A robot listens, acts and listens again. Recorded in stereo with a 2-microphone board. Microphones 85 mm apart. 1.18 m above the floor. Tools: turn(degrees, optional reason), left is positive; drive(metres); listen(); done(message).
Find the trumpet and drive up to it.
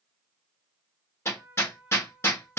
turn(degrees=-20, reason="The trumpet: about 20° right or 160° right.")
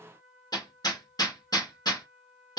drive(metres=1.0)
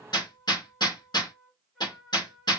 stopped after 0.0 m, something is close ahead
done("Something is in my way. I am facing the trumpet but have not reached it.")